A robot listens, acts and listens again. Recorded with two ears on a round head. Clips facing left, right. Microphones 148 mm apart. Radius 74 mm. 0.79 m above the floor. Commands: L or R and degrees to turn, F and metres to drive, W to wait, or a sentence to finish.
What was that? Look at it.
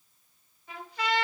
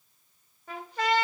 R40
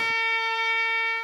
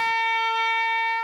R100
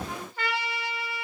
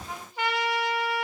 R15
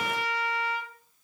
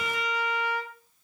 Found it: a trumpet, straight ahead.